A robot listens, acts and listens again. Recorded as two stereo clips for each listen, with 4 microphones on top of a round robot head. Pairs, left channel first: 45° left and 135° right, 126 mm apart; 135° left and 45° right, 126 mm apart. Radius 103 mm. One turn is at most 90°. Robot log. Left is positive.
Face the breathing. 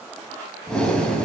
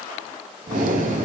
note: The breathing: 40° right.
cmd yaw -40
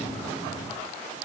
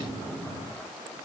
note: The breathing is now 10° left.
cmd yaw +10
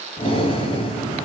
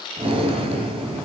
end: Facing the breathing, 2 to 4 m away.